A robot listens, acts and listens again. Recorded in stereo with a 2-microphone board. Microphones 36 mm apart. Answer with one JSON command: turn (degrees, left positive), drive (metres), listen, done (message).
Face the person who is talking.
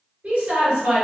{"turn": -35}
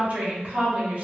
{"turn": -100}
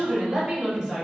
{"turn": -25}
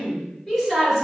{"done": "Found it: a woman speaking, straight ahead, 1 to 2 m away."}